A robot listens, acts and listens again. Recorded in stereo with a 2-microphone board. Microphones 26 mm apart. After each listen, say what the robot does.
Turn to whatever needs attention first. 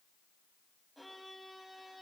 Keep listening.
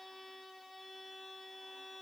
Keep listening.
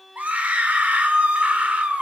Turn 90° right.
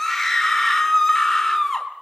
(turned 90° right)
Found it: a scream, straight ahead, 2 to 4 m away.